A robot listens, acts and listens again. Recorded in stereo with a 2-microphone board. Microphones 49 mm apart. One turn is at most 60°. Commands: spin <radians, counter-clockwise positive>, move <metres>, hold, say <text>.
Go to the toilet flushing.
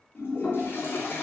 spin 0.96
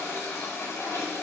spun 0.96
spin 1.05
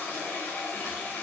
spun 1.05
spin 0.61
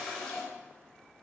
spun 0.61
spin 0.26
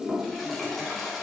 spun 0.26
move 1.0
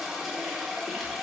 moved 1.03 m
move 1.0
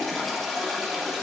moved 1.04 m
move 1.0
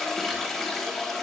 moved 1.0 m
move 1.0
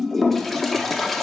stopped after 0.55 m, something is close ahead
say I am next to the toilet flushing.